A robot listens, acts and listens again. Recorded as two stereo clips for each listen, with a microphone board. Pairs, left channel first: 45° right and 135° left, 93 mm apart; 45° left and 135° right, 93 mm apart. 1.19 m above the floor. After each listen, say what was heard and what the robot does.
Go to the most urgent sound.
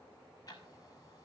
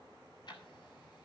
Keep listening.
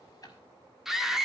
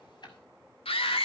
The scream: 50° left. Turn 50° left.
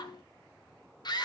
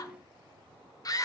Drive 1.0 m forward.
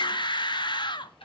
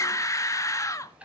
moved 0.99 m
The scream is now 10° right. Turn 10° right.
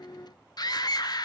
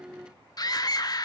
Drive 1.0 m forward.
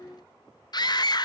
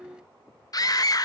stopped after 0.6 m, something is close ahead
Arrived at the scream, straight ahead.